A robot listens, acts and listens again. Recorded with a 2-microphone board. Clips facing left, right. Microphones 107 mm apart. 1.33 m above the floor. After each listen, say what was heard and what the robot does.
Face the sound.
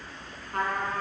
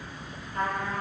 The trumpet: about 65° left or 115° left. Turn 65° left.
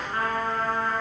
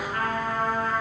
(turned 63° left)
So it is at 30° left. Turn 30° left.
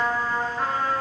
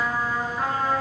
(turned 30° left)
Facing the trumpet, 2 to 4 m away.